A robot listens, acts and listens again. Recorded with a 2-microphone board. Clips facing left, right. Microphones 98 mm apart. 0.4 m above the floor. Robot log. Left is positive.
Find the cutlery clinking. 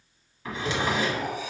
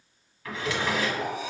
note: The cutlery clinking: about 35° right or 145° right.
cmd yaw -35
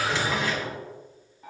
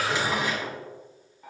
end: Facing the cutlery clinking, 1 to 2 m away.